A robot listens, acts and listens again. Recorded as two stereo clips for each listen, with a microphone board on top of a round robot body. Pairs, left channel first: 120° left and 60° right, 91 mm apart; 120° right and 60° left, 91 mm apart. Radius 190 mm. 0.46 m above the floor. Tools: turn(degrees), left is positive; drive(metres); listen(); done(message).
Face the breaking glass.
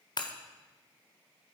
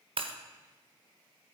turn(degrees=80)
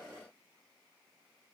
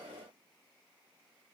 done("I heard breaking glass from this way, but can't make it out now.")